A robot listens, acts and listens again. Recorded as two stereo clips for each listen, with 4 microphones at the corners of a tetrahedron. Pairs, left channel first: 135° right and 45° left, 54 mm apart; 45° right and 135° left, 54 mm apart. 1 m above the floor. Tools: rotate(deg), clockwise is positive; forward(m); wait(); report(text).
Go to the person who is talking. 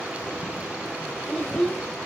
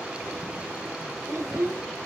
rotate(-145)
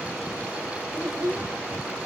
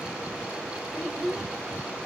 rotate(-30)
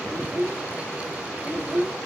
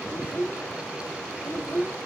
rotate(10)
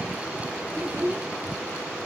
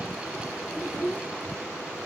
forward(1.0)
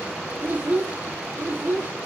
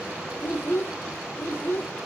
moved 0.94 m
forward(1.0)
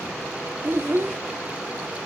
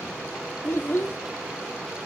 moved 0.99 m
forward(1.0)
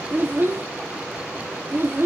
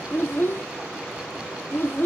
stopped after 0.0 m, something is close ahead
report("Arrived at the child speaking, straight ahead.")